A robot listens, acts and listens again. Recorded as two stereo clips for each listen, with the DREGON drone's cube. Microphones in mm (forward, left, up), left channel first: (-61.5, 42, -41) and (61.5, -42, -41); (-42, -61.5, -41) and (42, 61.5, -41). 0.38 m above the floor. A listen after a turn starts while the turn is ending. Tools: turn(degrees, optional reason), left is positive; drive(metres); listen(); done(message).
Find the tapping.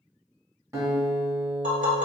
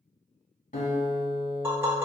turn(degrees=-20, reason="The tapping: 20° right.")
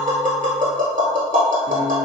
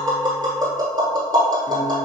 done("Facing the tapping, 1 to 2 m away.")